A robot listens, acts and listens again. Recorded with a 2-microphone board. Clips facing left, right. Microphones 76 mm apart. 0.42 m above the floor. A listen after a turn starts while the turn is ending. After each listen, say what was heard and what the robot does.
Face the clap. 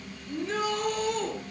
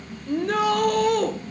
Keep listening.
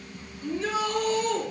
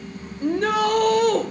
Keep listening.
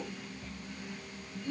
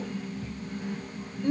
I can't make out a clap to turn to.